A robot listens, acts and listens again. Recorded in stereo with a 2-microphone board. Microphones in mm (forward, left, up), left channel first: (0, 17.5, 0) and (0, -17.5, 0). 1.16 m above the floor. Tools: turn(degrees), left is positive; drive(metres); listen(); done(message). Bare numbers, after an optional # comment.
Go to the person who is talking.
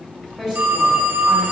# The woman speaking: about 20° right or 160° right.
turn(-20)
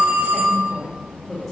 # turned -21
drive(1.0)
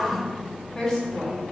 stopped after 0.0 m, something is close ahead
done("Blocked. The woman speaking is further on, straight ahead.")